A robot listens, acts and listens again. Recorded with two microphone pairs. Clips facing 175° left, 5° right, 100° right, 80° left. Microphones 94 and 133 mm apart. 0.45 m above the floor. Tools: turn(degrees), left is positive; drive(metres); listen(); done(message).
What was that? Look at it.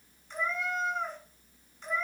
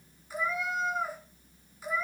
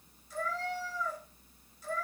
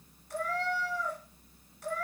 turn(degrees=75)
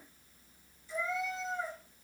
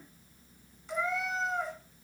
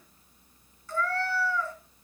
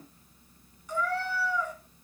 done("Found it: a cat meowing, straight ahead.")